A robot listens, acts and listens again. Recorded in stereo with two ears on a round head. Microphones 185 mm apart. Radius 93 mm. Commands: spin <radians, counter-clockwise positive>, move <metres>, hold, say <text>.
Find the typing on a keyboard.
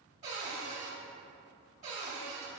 hold
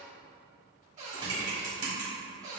spin -0.35
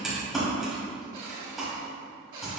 say Found it: typing on a keyboard, straight ahead.